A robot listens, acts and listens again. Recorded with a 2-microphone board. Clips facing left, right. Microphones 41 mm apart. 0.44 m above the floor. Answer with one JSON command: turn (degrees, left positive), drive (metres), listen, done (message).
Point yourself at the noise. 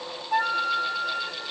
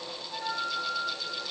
{"turn": 60}
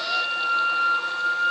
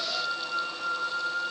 {"turn": 50}
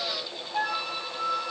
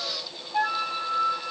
{"turn": -15}
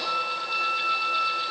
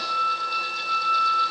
{"done": "Found it: a flute, straight ahead."}